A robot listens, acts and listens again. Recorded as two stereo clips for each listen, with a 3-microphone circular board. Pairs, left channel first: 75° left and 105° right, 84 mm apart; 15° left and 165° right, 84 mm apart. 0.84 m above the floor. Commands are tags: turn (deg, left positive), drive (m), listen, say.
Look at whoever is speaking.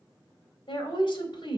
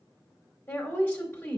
<turn deg="85"/>
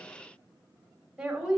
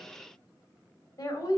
<turn deg="-25"/>
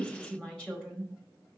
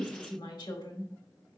<say>Facing the woman speaking.</say>